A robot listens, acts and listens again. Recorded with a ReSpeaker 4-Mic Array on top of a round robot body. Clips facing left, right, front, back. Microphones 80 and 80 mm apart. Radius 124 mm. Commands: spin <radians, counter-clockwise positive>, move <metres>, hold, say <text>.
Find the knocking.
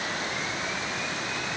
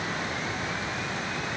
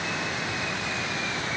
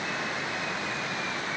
hold
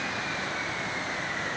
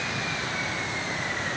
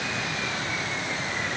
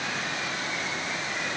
hold
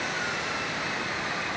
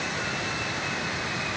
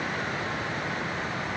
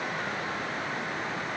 say I can't make out knocking.